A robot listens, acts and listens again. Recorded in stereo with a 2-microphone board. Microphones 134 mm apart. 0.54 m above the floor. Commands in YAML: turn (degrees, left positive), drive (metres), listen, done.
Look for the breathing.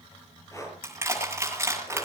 turn: 25
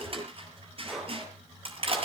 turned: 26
done: "Found it: breathing, straight ahead, over 4 m away."